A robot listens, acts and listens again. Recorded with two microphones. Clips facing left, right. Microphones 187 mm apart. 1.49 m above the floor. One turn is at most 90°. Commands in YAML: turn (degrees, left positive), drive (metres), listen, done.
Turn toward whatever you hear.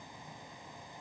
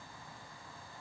listen: true
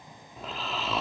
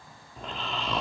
turn: 30
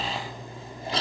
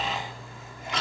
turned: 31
turn: 90
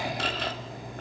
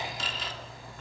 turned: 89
turn: 60
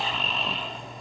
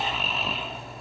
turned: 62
done: "Facing the snoring."